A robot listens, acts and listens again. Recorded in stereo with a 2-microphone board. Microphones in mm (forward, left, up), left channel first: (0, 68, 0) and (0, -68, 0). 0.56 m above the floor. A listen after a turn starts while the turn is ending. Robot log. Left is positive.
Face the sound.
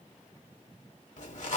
note: The zipper: about 70° left or 110° left.
cmd yaw +70
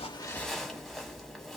end: Found it: a zipper, straight ahead, 1 to 2 m away.